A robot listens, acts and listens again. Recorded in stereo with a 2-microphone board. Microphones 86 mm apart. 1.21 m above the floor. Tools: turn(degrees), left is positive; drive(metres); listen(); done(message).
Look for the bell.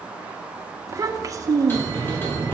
turn(degrees=25)
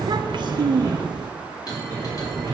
turn(degrees=135)
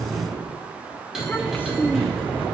done("Found it: a bell, straight ahead, over 4 m away.")